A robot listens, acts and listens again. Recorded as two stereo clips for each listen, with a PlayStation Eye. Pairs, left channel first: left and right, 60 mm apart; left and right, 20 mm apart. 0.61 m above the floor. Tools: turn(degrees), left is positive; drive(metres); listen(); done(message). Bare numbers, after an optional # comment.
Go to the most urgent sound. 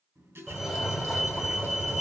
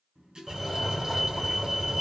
turn(30)
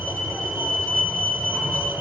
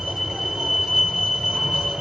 # So it is at 30° right.
turn(-30)
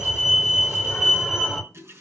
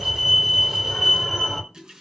drive(1.0)
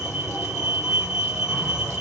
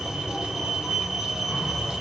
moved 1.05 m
# The fire alarm is now 10° right.
turn(-10)
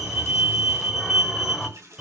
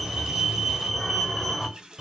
drive(1.0)
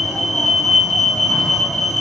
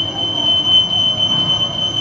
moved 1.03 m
drive(1.0)
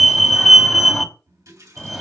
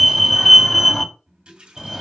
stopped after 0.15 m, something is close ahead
done("Arrived at the fire alarm, straight ahead.")